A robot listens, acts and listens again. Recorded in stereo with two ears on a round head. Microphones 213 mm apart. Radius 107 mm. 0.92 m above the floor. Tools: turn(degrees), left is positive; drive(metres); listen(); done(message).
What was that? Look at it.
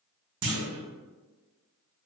turn(degrees=-50)
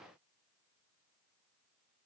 listen()
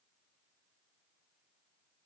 done("I heard a clunk, but can't make it out now. It was about straight ahead or 80° right.")